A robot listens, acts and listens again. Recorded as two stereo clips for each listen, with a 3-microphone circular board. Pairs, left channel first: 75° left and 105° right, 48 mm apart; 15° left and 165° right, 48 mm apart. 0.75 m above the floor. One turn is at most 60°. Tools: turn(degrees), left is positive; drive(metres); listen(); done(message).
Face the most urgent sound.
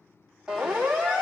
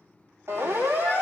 turn(degrees=60)
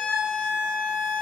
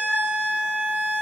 turn(degrees=60)
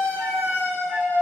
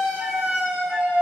turn(degrees=50)
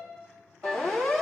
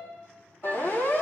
done("Facing the siren.")